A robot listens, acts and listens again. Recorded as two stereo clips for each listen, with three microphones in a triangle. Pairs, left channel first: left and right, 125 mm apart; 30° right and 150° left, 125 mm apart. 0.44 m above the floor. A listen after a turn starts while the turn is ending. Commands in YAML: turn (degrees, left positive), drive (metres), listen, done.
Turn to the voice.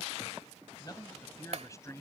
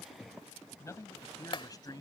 turn: 25
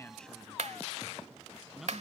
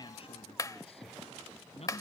done: "Found it: a man speaking, straight ahead."